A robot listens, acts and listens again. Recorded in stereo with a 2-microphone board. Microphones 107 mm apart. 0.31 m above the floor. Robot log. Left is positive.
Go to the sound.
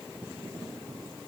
cmd idle
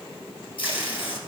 note: The tape being pulled: about 60° left or 120° left.
cmd yaw +60
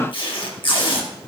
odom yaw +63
note: So it is at 60° left.
cmd yaw +60
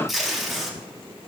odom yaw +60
cmd fwd 1.0
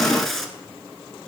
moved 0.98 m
cmd fwd 1.0
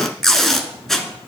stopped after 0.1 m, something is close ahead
end: Arrived at the tape being pulled, straight ahead.